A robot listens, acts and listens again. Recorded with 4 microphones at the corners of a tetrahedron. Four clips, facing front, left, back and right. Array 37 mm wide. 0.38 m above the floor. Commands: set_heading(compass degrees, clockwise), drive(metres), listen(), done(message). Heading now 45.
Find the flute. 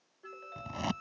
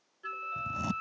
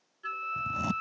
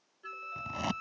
set_heading(245)
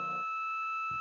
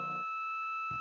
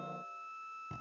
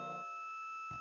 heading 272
set_heading(242)
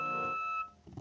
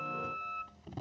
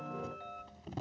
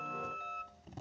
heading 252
set_heading(242)
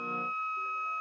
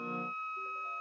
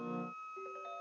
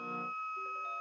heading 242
done("Found it: a flute, straight ahead.")